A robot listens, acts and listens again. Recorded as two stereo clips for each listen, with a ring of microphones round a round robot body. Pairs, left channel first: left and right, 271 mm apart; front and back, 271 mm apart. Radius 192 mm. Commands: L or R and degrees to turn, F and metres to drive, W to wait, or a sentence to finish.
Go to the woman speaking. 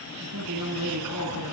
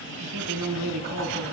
R135
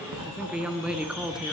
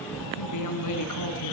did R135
F1.0
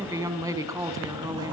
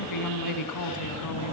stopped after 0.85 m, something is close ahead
R10
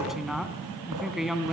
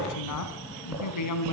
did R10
Something is in my way. I am facing the woman speaking but have not reached it.